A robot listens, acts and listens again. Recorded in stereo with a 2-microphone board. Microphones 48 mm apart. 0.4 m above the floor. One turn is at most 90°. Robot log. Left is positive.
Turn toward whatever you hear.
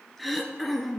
cmd yaw +30
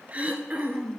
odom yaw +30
note: So it is at 30° right.
cmd yaw -30
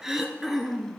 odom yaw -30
note: The throat clearing is now 10° right.
cmd yaw -10
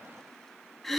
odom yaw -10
end: Facing the throat clearing.